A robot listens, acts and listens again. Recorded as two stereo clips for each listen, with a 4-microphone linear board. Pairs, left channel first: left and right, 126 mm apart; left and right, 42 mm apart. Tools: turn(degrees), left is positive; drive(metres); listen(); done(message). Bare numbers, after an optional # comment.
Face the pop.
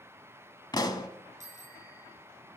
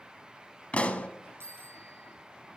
# The pop: about 35° left or 145° left.
turn(35)
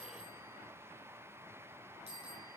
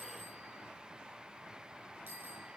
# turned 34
listen()
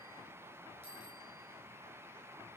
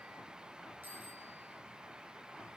done("I heard a pop, but can't make it out now. It was about straight ahead or 115° left.")